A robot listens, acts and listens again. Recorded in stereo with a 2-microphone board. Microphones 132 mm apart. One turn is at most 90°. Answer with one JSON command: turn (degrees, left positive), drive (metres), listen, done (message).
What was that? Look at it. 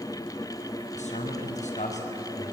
{"turn": 65}
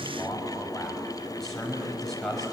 {"done": "Facing the man speaking."}